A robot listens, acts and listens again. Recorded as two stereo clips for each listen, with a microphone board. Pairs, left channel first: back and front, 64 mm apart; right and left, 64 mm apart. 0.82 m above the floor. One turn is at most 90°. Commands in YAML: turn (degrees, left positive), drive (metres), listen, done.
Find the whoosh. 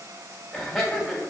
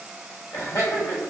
listen: true
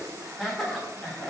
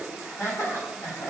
listen: true
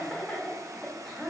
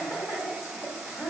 done: "I can't make out a whoosh to turn to."